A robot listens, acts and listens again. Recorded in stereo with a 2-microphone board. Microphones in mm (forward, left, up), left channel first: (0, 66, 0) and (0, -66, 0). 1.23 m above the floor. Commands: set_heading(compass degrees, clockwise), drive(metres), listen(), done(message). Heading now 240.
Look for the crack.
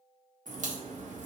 set_heading(330)
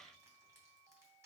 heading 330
done("Facing where the crack came from. I can't hear it now.")